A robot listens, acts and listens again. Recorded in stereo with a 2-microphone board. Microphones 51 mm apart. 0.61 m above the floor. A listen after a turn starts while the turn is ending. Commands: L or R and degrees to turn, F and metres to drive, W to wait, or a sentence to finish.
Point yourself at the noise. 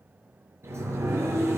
R60
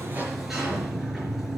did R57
Found it: a sliding door, straight ahead, over 4 m away.